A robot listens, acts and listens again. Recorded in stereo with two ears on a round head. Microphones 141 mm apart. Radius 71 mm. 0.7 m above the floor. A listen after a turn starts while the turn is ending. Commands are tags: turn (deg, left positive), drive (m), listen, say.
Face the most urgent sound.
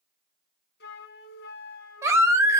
<turn deg="-20"/>
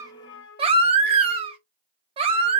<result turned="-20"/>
<turn deg="-140"/>
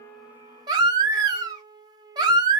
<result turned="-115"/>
<turn deg="-25"/>
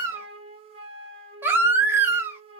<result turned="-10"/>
<turn deg="-15"/>
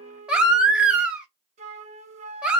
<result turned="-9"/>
<say>Found it: a baby crying, straight ahead.</say>